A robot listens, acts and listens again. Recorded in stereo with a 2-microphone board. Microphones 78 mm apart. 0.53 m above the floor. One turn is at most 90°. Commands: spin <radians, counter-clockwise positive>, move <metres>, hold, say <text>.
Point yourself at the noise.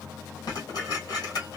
spin 1.05
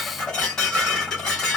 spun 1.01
spin 0.17
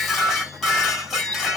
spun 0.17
say Found it: dishes clattering, straight ahead, 1 to 2 m away.